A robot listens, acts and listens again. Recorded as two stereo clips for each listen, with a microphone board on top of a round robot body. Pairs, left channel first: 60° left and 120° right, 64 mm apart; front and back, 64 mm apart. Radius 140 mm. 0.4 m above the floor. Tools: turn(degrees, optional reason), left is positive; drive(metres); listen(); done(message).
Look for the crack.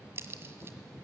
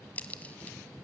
turn(degrees=-65, reason="The crack: 65° right.")
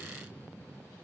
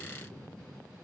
done("I heard a crack from this way, but can't make it out now.")